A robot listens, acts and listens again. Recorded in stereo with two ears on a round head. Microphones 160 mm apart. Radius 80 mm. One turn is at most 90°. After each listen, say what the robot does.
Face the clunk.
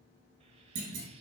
Turn 75° right.
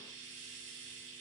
Keep listening.
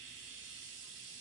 I heard a clunk, but can't make it out now. It was about straight ahead or 30° right.